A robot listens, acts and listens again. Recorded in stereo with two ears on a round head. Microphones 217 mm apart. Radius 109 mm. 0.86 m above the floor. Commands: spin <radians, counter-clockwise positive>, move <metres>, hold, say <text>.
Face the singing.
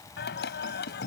spin 0.79
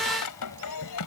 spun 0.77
spin 1.40
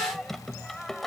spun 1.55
say Found it: singing, straight ahead.